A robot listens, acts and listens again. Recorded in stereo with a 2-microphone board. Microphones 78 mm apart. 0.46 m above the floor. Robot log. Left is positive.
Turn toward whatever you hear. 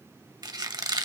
note: The squeak: about 65° right or 115° right.
cmd yaw -65
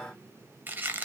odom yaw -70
note: So it is at 30° right.
cmd yaw -30
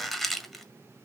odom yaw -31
end: Found it: a squeak, straight ahead, 1 to 2 m away.